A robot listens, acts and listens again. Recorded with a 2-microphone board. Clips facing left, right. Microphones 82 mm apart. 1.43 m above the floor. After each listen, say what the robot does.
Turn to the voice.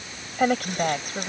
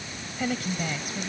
Turn 50° left.
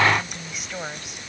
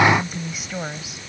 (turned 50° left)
Facing the woman speaking.